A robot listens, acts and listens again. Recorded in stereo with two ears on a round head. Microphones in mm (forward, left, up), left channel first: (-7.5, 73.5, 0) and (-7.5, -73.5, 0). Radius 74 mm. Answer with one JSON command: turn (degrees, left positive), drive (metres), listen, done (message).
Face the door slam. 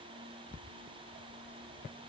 {"listen": true}
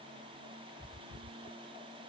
{"listen": true}
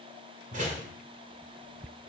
{"turn": -50}
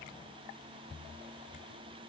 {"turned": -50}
{"listen": true}
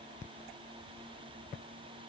{"done": "I heard a door slam, but can't make it out now. It was about straight ahead or 80° right."}